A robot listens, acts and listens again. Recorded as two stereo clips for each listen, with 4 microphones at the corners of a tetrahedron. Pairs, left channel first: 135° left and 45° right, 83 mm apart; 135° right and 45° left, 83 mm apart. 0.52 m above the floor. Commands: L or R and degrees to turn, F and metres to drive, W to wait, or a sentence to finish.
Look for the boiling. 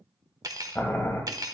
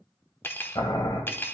R165
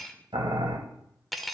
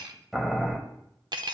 R45
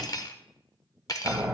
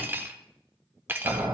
L20
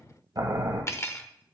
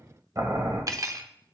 Found it: boiling, straight ahead, 1 to 2 m away.